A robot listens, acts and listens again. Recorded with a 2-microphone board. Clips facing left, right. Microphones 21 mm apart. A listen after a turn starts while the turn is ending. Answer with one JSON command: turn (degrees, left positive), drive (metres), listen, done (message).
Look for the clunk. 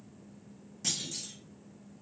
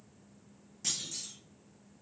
{"turn": 30}
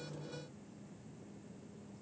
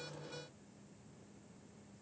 {"listen": true}
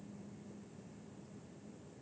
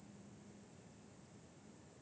{"done": "I heard a clunk, but can't make it out now. It was about 20° right or 140° left."}